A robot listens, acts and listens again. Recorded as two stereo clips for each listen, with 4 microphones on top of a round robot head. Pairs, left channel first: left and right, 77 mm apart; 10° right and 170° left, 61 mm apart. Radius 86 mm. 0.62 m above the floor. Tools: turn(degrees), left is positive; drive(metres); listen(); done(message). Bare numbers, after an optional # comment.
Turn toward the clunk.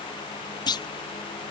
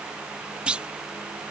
# The clunk: 100° left.
turn(100)
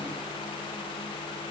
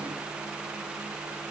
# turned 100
done("I heard a clunk from this way, but can't make it out now.")